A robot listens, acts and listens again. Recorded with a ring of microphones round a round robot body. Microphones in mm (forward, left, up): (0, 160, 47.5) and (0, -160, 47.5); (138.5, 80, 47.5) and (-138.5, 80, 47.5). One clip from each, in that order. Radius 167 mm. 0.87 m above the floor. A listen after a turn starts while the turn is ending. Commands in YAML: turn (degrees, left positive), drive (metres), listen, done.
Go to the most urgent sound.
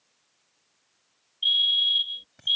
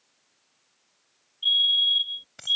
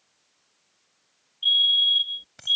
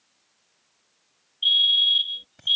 turn: 145
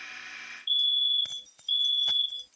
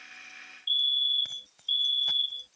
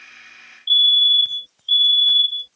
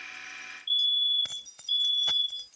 drive: 1.0
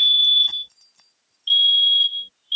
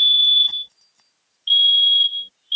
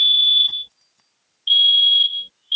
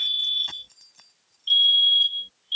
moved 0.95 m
drive: 1.0
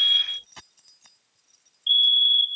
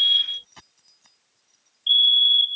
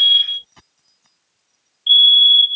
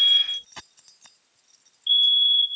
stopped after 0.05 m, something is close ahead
done: "Arrived at the fire alarm, straight ahead."